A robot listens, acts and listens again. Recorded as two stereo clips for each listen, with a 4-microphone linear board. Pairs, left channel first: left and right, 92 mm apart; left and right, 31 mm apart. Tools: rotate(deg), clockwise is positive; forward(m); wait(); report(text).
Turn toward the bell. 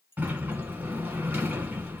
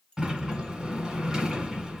rotate(-25)
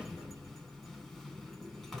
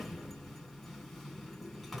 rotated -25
wait()
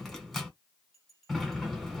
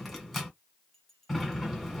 report("Facing the bell, under 1 m away.")